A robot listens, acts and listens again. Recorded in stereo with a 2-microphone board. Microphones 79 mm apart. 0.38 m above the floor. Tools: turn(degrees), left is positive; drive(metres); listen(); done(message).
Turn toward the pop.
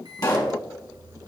turn(degrees=50)
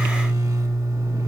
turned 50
listen()
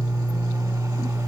done("I heard a pop, but can't make it out now. It was about straight ahead or 80° left.")